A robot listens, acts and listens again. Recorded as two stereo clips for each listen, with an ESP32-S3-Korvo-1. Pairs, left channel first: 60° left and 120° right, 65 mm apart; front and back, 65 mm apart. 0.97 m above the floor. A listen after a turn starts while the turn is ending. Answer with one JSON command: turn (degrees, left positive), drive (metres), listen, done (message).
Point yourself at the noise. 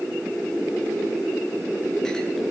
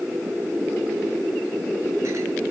{"listen": true}
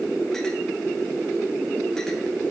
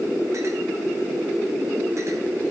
{"listen": true}
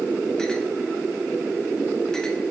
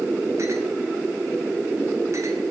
{"done": "I can't make out anything to turn to."}